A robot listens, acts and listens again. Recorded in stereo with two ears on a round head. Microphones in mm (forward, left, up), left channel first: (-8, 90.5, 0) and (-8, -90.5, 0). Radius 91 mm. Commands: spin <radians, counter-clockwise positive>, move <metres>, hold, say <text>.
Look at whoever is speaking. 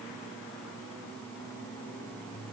hold
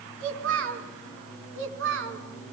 spin -1.22
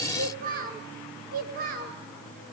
spin -0.79
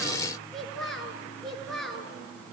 say Found it: a child speaking, straight ahead, over 4 m away.